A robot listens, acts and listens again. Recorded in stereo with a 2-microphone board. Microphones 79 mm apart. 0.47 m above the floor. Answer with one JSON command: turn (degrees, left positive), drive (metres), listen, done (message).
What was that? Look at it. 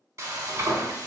{"turn": -40}
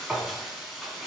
{"done": "Facing the frying, under 1 m away."}